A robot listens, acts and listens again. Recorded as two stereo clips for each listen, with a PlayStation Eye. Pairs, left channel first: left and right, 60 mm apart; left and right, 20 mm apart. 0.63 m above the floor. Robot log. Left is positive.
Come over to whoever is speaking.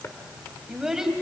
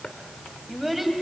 cmd yaw -30
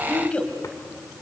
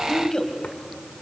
note: So it is at 25° left.
cmd yaw +25
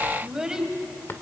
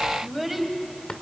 note: The child speaking is now 10° right.
cmd yaw -10
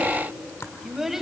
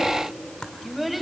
cmd fwd 1.0
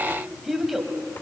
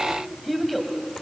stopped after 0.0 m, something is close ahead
end: Something is in my way. I am facing the child speaking but have not reached it.